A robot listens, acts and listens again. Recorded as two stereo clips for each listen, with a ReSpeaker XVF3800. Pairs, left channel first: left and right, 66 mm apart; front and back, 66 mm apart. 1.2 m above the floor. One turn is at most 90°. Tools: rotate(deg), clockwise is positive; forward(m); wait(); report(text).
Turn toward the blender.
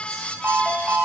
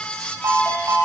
wait()
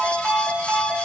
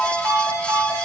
wait()
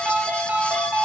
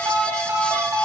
report("I can't make out a blender to turn to.")